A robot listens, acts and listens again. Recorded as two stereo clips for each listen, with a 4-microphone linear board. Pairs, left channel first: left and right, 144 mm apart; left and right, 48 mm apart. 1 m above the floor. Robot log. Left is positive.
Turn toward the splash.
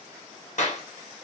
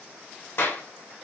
cmd idle
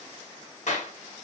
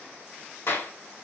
cmd idle
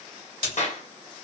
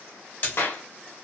note: The splash: about 45° left or 135° left.
cmd yaw +45
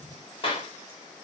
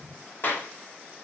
cmd idle
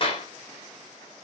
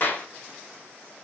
end: I heard a splash, but can't make it out now. It was about straight ahead or 90° left.